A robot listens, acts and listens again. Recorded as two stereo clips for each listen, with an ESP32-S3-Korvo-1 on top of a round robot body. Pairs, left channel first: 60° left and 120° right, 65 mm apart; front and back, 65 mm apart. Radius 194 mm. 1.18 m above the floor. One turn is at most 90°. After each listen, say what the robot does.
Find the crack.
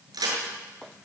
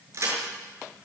Turn 90° right.
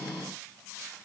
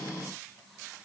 Turn 45° right.
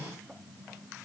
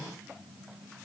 I heard a crack from this way, but can't make it out now.